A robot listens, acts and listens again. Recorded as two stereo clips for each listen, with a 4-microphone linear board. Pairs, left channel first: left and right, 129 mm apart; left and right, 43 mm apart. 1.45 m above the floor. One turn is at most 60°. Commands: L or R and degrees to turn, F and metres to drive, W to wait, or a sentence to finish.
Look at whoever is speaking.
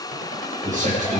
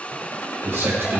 R60
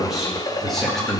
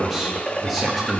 Facing the man speaking.